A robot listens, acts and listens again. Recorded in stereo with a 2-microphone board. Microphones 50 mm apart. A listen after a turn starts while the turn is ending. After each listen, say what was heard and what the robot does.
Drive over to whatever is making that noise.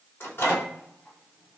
The microwave: about 55° left or 125° left. Turn 55° left.
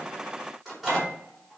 Drive 1.0 m forward.
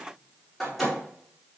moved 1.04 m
Drive 1.0 m forward.
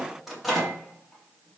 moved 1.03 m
Drive 1.0 m forward.
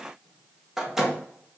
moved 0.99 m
The microwave is now 10° right. Turn 10° right.
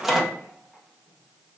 Drive 1.0 m forward.
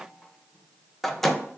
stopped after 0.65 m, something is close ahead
I am next to the microwave.